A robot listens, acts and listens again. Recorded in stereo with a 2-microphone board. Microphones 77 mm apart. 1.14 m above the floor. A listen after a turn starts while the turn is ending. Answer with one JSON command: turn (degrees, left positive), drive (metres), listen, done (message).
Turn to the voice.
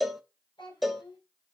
{"turn": 90}
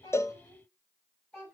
{"turn": 20}
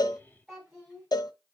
{"done": "Found it: a child speaking, straight ahead."}